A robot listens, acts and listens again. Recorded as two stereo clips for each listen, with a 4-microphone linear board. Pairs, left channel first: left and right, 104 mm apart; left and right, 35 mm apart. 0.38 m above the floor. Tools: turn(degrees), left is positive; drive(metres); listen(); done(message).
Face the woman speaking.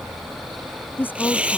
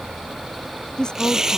turn(degrees=20)
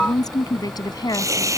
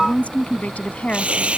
turn(degrees=140)
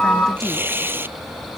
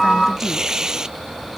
listen()
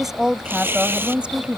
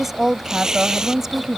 turn(degrees=-15)
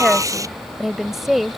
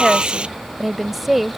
done("Facing the woman speaking.")